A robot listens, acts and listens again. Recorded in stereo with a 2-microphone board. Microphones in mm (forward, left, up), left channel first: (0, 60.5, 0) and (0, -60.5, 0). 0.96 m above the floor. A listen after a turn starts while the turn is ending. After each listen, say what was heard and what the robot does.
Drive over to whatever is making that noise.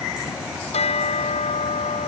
The bell: about 60° left or 120° left. Turn 60° left.
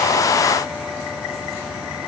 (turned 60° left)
Keep listening.
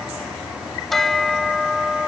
Drive 1.0 m forward.
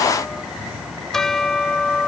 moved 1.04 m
Drive 1.0 m forward.
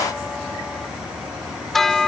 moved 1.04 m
Drive 1.0 m forward.
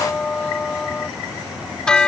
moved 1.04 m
Drive 1.0 m forward.
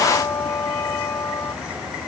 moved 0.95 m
The bell is now 25° left. Turn 25° left.
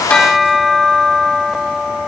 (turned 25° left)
Drive 1.0 m forward.
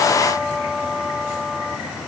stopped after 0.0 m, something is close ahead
Arrived at the bell, straight ahead.